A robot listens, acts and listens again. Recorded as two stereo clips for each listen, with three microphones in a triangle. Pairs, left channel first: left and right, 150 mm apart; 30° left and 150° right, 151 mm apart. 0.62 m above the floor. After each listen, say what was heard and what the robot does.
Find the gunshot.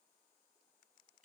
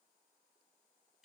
Keep listening.
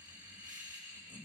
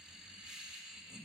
Keep listening.
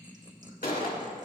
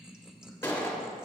The gunshot: 105° left. Turn 105° left.
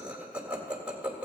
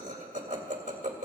I heard a gunshot from this way, but can't make it out now.